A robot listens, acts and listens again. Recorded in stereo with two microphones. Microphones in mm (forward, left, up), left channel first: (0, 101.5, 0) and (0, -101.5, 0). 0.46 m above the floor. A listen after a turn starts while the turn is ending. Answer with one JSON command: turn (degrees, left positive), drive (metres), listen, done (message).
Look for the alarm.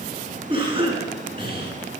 {"listen": true}
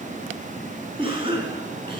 {"listen": true}
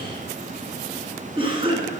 {"done": "I can't make out an alarm, only a cough."}